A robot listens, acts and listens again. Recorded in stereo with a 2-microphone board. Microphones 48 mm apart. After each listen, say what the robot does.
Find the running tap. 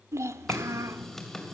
Turn 30° left.
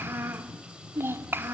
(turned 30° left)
Turn 20° right.
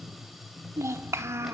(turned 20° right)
Facing the running tap, 2 to 4 m away.